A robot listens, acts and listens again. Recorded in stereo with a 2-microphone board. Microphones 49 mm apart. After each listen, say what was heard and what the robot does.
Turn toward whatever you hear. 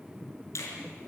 The finger snap: about 75° left or 105° left. Turn 75° left.
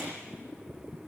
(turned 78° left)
Keep listening.
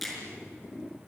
Found it: a finger snap, straight ahead.